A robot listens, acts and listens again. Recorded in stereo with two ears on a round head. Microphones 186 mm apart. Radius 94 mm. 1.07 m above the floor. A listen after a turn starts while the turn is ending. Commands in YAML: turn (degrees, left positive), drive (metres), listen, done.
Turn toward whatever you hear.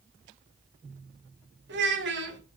turn: -60
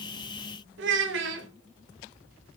turn: -60
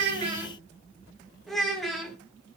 done: "Facing the child speaking, 2 to 4 m away."